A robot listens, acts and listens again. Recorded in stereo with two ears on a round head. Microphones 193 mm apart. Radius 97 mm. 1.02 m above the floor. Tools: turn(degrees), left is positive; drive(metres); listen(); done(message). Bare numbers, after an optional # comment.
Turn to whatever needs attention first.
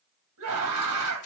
turn(-90)
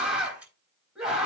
done("Facing the scream.")